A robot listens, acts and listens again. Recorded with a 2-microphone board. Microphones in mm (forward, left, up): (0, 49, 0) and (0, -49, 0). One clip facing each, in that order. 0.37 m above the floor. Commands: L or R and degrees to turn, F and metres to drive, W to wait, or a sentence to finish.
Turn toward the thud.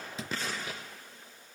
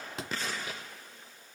R90
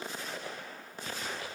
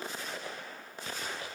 Facing where the thud came from. I can't hear it now.